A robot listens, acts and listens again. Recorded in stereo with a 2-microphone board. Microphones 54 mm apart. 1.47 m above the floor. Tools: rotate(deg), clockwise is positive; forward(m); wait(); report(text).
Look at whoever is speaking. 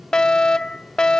wait()
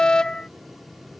wait()
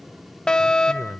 rotate(60)
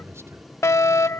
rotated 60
rotate(55)
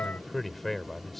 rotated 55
report("Found it: a man speaking, straight ahead.")